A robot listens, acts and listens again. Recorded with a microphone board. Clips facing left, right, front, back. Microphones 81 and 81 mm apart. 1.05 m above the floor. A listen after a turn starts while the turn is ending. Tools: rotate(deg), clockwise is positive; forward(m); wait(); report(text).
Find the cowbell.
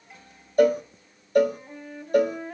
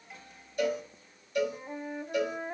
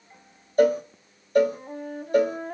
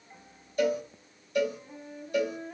rotate(-45)
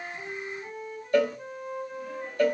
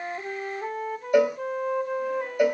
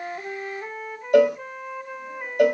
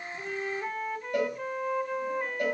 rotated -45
rotate(15)
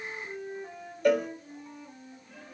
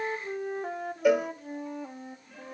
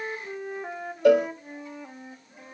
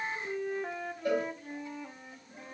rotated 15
report("Facing the cowbell.")